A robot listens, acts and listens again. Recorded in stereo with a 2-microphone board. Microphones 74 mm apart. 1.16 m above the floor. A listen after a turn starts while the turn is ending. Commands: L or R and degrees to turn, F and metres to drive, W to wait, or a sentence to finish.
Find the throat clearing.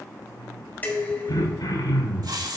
L60
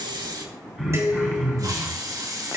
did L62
Facing the throat clearing.